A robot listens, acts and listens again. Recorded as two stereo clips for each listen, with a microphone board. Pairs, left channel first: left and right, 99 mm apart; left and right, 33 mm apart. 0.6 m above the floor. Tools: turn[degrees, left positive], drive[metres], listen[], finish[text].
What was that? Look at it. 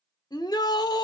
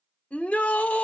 Thought: The shout: about 45° left or 135° left.
Action: turn[45]
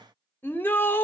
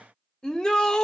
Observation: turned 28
Thought: So it is at 25° left.
Action: turn[25]
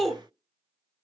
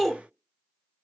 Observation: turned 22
Action: finish[Found it: a shout, straight ahead.]